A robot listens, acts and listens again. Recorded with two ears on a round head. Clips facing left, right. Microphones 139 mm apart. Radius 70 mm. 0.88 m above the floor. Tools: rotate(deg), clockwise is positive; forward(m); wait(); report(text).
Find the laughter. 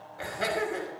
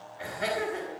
rotate(-90)
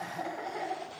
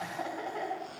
report("Facing the laughter.")